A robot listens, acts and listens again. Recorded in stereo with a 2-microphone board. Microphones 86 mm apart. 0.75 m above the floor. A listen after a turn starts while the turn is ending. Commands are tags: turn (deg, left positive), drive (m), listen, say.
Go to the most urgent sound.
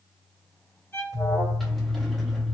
<turn deg="45"/>
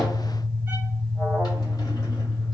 <turn deg="10"/>
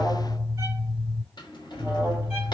<drive m="1.0"/>
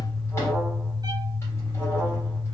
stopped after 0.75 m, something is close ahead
<say>I am next to the alarm.</say>